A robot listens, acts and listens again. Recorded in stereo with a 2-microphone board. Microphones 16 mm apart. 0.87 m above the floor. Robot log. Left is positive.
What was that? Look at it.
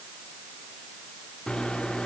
note: The microwave: about 60° left or 120° left.
cmd yaw +60
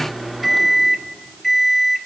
end: Facing the microwave.